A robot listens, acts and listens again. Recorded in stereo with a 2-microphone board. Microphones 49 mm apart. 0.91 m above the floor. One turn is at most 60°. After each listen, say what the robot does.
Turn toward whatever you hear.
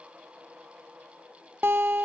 Turn 45° right.
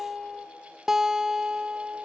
Turn 10° right.
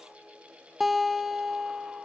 Facing the guitar.